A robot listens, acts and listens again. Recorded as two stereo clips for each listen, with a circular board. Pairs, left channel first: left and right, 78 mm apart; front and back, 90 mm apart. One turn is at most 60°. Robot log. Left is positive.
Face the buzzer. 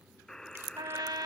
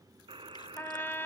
note: The buzzer: 170° left.
cmd yaw +60
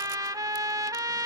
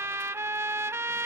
note: Nothing new. It was at 110° left.
cmd yaw +60
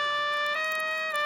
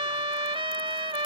note: Nothing new. It was at 50° left.
cmd yaw +50
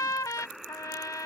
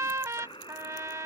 end: Found it: a buzzer, straight ahead.